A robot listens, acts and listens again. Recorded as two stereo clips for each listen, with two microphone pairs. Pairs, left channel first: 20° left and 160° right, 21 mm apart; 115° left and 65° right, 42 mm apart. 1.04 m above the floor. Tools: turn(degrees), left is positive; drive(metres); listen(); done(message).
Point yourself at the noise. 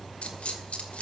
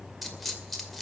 turn(degrees=30)
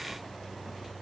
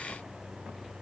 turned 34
done("Facing where the dropped coin came from. I can't hear it now.")